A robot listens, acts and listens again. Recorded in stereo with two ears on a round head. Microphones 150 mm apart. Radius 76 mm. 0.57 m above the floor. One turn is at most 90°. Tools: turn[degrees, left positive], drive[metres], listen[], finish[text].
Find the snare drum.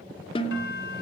Thought: The snare drum: about 35° left or 145° left.
Action: turn[35]
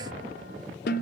Thought: So it is at 110° left.
Action: turn[90]
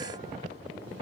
Thought: Nothing new. It was at 20° left.
Action: turn[20]
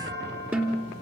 Thought: The snare drum is now 10° right.
Action: turn[-10]
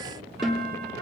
Action: finish[Found it: a snare drum, straight ahead, 2 to 4 m away.]